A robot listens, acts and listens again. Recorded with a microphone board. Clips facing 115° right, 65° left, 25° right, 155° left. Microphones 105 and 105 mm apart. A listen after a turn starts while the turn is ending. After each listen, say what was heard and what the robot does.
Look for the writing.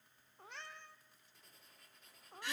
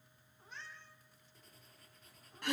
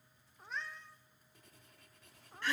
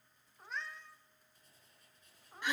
The writing: 20° right. Turn 20° right.
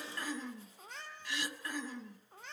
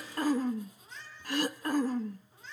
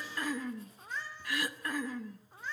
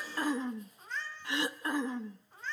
Keep listening.
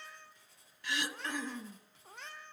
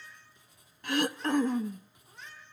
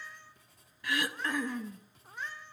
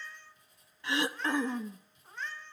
The writing is now 10° right. Turn 10° right.
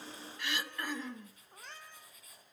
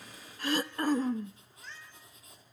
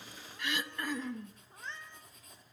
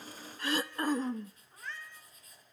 Facing the writing.